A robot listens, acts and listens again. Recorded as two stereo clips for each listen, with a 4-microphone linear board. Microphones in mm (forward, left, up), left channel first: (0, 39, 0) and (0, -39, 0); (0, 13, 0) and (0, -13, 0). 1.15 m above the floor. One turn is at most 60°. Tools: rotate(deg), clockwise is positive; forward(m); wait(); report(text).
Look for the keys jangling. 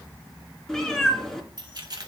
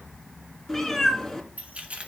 rotate(60)
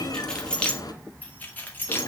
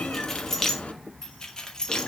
rotate(-25)
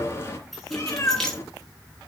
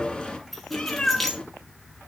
report("Facing the keys jangling, 2 to 4 m away.")